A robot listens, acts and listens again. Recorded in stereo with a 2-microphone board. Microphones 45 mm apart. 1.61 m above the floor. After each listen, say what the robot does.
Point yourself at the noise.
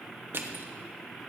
Turn 55° right.
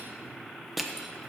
Found it: crushing, straight ahead, 1 to 2 m away.